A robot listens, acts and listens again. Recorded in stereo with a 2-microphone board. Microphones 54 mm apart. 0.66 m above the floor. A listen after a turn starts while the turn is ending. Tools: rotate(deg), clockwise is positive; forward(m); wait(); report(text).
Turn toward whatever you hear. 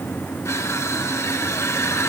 rotate(-60)
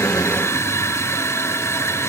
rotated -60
rotate(-55)
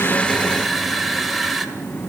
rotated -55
report("Facing the crushing.")